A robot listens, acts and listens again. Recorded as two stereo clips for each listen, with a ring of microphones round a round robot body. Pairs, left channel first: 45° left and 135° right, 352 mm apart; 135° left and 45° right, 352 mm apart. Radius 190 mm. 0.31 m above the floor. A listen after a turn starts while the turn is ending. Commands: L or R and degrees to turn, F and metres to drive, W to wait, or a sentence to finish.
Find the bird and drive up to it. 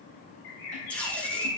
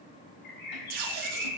L70
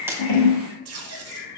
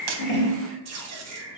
L25
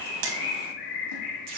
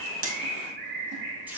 R20
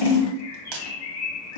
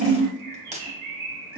F1.0
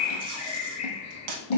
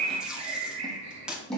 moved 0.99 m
F1.0
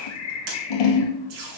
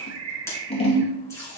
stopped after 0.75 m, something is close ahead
I am next to the bird.